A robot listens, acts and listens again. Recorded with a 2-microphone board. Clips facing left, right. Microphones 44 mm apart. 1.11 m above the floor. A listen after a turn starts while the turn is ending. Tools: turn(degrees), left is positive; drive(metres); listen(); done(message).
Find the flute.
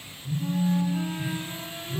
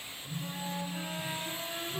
turn(degrees=-30)
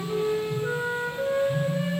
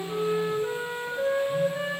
turn(degrees=-145)
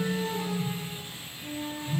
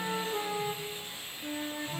turn(degrees=-40)
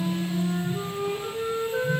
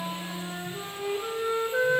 turn(degrees=-10)
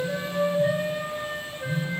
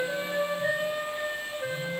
done("Found it: a flute, straight ahead, 1 to 2 m away.")